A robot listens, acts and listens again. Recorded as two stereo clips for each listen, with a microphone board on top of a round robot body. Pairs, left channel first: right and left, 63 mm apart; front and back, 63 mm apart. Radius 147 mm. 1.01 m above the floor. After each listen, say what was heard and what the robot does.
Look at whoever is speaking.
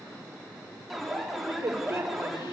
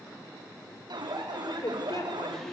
The woman speaking: 40° left. Turn 40° left.
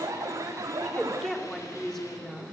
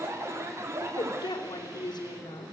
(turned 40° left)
The woman speaking is now 10° right. Turn 10° right.
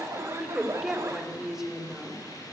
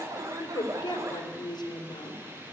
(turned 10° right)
Facing the woman speaking, 2 to 4 m away.